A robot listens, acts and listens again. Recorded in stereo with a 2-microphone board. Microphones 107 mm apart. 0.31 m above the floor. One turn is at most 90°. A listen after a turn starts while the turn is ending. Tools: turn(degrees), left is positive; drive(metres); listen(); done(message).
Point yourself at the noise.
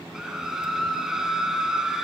turn(degrees=-30)
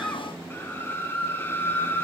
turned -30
turn(degrees=25)
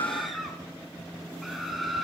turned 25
done("Facing the scream.")